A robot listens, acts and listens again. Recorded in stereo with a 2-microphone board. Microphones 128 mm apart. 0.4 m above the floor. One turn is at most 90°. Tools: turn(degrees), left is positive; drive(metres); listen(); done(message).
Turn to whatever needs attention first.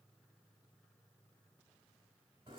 listen()
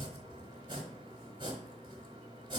listen()
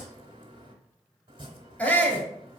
turn(degrees=30)
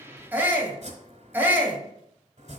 turn(degrees=-20)
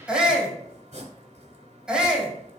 turn(degrees=-10)
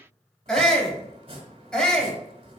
done("Facing the shout.")